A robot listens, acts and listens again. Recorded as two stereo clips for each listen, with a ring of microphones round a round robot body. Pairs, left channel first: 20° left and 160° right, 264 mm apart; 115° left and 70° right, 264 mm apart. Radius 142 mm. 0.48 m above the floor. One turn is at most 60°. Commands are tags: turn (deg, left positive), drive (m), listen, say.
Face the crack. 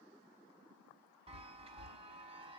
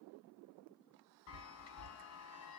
<listen/>
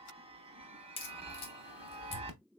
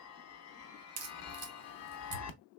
<turn deg="-45"/>
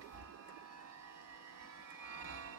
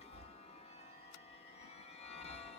<say>I heard a crack from this way, but can't make it out now.</say>